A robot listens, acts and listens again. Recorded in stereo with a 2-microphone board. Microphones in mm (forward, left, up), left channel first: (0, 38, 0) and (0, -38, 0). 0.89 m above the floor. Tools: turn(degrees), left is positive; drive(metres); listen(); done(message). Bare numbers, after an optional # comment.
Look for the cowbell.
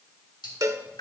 # The cowbell: about 45° right or 135° right.
turn(-45)
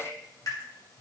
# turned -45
listen()
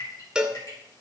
# So it is at 15° right.
turn(-15)
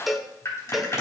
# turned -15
done("Facing the cowbell.")